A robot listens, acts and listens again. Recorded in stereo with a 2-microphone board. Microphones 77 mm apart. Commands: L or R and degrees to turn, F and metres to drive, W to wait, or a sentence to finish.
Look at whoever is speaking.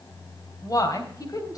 L55
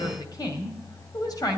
L65
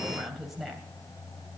Found it: a woman speaking, straight ahead, 2 to 4 m away.